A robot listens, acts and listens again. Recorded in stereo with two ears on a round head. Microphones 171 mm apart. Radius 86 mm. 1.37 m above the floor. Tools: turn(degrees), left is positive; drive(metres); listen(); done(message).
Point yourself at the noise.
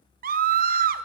turn(degrees=-50)
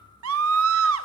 turn(degrees=-80)
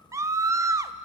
turn(degrees=-15)
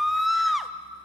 done("Facing the scream, under 1 m away.")